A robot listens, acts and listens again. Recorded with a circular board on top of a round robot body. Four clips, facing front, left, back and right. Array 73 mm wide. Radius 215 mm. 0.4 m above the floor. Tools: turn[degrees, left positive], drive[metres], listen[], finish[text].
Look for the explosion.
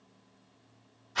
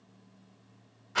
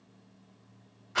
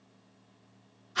Action: listen[]
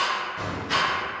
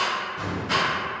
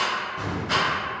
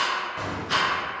Thought: The explosion: 80° right.
Action: turn[-80]
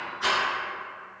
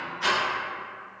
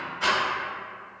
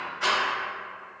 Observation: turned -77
Action: finish[I heard an explosion from this way, but can't make it out now.]